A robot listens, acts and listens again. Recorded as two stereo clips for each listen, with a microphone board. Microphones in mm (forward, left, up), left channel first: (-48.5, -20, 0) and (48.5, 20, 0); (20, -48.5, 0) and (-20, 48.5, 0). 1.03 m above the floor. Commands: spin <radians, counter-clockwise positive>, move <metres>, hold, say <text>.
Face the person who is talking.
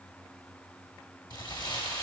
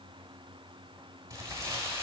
hold
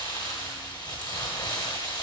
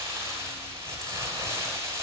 hold
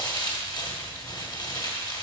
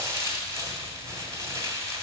say I can't make out anyone speaking to turn to.